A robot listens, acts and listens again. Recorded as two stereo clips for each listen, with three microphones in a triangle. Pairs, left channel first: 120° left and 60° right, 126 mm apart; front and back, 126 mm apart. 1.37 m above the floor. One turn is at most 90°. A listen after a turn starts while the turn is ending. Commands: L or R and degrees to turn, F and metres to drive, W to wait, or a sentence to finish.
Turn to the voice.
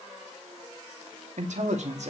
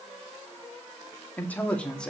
R85
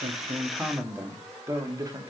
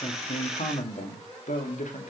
Facing the man speaking.